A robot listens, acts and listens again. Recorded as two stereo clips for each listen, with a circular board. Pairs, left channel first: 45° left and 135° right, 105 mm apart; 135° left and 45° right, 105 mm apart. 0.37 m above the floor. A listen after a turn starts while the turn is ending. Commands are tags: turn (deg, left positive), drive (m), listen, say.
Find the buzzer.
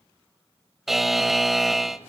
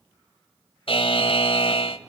<turn deg="135"/>
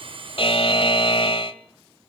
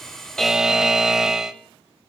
<turn deg="40"/>
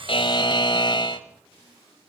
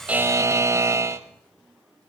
<turn deg="10"/>
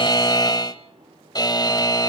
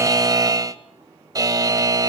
<say>Found it: a buzzer, straight ahead.</say>